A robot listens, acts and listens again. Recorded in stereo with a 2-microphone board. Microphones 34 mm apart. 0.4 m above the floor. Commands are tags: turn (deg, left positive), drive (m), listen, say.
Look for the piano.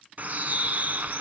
<listen/>
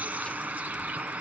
<listen/>
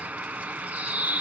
<say>I can't make out a piano, only a bird.</say>